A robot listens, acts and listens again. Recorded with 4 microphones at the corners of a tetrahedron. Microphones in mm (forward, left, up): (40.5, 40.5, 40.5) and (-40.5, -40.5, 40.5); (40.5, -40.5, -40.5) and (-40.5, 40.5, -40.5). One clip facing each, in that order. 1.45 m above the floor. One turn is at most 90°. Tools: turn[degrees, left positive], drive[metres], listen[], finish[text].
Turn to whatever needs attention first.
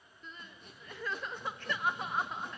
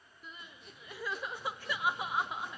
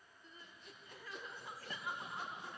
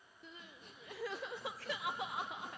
Thought: The crying: 145° left.
Action: turn[90]
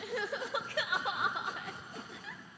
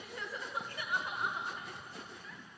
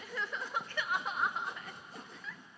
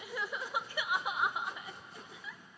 Thought: The crying is now 55° left.
Action: turn[55]
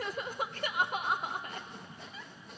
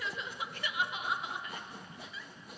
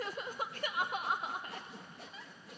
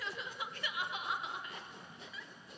Action: finish[Facing the crying.]